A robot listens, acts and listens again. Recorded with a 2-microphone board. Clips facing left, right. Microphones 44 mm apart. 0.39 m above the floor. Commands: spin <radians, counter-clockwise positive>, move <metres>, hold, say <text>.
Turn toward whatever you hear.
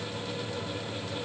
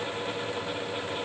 hold
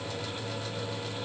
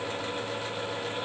hold
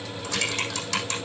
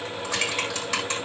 spin -0.52
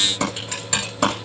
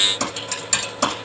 spin 0.35
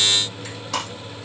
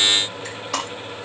say Facing the typing on a keyboard, over 4 m away.